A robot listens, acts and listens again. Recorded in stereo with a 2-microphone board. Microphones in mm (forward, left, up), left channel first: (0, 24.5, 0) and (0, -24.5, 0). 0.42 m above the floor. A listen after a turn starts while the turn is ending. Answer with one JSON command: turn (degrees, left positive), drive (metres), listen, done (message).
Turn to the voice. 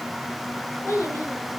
{"turn": 65}
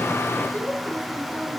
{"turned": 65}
{"turn": 50}
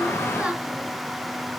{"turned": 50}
{"listen": true}
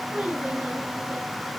{"turn": -20}
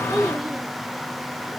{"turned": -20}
{"done": "Found it: a child speaking, straight ahead, over 4 m away."}